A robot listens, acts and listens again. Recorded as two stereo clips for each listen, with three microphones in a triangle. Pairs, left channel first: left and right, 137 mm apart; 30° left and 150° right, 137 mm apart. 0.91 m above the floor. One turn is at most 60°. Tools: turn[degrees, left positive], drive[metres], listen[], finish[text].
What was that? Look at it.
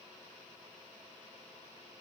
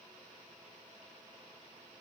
Action: listen[]
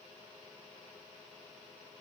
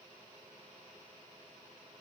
Action: listen[]
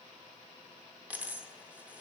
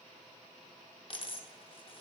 Thought: The dropped coin: 15° right.
Action: turn[-15]
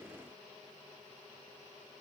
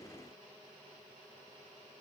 Action: finish[I heard a dropped coin from this way, but can't make it out now.]